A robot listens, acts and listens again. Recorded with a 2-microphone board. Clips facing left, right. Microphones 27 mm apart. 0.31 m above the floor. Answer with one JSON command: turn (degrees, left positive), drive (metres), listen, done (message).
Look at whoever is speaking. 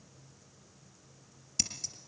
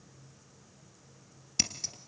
{"listen": true}
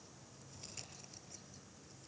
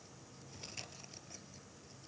{"listen": true}
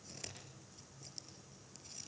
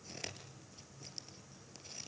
{"done": "I can't make out anyone speaking to turn to."}